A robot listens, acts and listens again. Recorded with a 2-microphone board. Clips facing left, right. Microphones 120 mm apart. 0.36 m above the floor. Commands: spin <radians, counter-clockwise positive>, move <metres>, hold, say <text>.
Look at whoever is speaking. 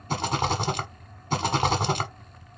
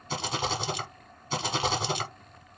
hold
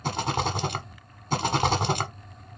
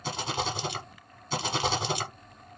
hold
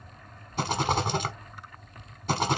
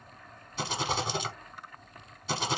say I can't make out anyone speaking to turn to.